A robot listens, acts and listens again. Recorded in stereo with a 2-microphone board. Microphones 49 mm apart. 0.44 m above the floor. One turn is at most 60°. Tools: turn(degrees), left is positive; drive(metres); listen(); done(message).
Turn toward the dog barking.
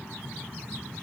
listen()
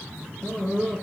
turn(degrees=30)
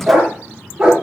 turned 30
turn(degrees=-15)
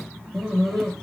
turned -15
done("Found it: a dog barking, straight ahead.")